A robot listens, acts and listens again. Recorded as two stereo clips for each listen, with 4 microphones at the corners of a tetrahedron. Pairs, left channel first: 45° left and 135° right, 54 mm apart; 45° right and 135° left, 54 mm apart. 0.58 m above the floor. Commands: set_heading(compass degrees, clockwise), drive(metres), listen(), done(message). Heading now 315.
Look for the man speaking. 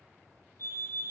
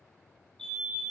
listen()
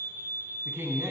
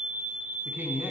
set_heading(130)
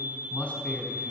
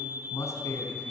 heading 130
set_heading(150)
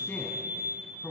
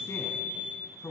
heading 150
done("Found it: a man speaking, straight ahead.")